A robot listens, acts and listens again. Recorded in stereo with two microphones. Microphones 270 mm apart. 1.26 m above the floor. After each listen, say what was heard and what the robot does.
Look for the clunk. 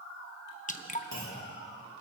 Turn 90° left.
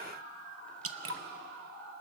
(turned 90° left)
Facing where the clunk came from. I can't hear it now.